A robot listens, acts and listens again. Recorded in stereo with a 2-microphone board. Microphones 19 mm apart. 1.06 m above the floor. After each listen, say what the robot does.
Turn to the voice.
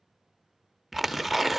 Keep listening.
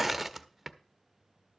Keep listening.
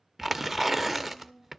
Turn 90° left.
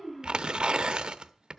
Found it: a child speaking, straight ahead, over 4 m away.